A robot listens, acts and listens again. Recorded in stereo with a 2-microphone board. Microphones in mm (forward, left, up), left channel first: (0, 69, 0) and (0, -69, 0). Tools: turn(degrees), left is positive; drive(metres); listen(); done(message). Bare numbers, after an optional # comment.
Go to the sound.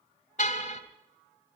# The car horn: about 60° left or 120° left.
turn(60)
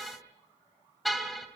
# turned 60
drive(1.0)
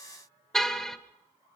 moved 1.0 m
drive(1.0)
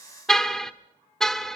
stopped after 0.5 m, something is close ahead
done("Arrived at the car horn, straight ahead.")